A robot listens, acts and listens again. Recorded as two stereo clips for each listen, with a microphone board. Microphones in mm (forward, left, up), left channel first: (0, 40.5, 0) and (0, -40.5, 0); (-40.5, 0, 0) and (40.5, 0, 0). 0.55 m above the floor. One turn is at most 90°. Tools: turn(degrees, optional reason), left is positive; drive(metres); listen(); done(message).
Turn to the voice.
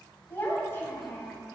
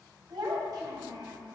turn(degrees=35, reason="The child speaking: 35° left.")
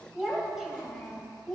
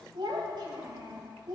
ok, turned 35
done("Facing the child speaking, 1 to 2 m away.")